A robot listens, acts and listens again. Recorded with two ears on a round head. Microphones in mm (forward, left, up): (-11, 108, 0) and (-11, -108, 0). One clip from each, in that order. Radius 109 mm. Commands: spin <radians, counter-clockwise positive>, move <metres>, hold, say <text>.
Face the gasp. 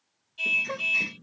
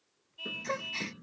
spin -0.52
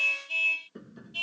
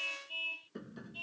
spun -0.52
hold
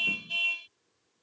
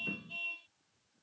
say I heard a gasp, but can't make it out now. It was about 20° left or 140° right.